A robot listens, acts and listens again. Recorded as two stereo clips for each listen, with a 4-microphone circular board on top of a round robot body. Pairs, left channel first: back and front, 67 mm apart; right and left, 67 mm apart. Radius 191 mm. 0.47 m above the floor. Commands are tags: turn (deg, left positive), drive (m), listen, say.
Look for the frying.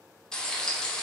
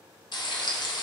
<turn deg="-100"/>
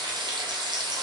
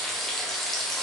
<say>Facing the frying.</say>